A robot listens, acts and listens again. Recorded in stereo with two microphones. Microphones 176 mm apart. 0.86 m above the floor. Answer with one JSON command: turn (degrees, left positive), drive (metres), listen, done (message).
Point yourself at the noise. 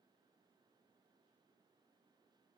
{"listen": true}
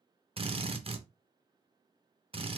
{"turn": -30}
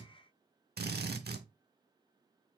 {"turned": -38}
{"turn": -110}
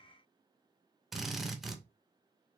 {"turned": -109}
{"done": "Facing the drill."}